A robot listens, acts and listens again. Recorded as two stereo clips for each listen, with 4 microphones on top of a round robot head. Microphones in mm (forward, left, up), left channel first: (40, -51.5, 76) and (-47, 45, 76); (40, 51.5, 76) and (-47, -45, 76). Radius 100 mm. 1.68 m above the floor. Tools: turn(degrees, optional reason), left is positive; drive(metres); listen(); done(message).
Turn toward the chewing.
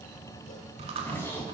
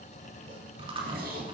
turn(degrees=180, reason="The chewing: straight behind.")
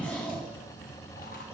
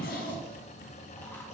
listen()
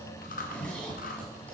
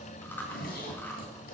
turn(degrees=-30, reason="The chewing is now 30° right.")
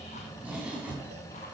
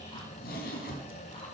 listen()
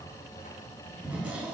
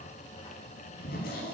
listen()
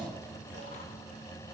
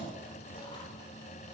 done("I heard chewing from this way, but can't make it out now.")